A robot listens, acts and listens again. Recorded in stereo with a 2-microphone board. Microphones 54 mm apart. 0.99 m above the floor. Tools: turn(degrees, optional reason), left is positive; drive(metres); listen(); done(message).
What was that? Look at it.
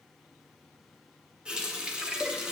turn(degrees=-15, reason="The running tap: about 15° right or 165° right.")
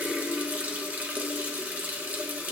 turn(degrees=-150, reason="So it is at 150° right.")
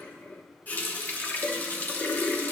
turn(degrees=35, reason="The running tap is now 35° left.")
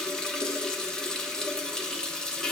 turn(degrees=15, reason="The running tap is now 15° left.")
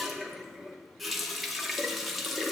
done("Facing the running tap.")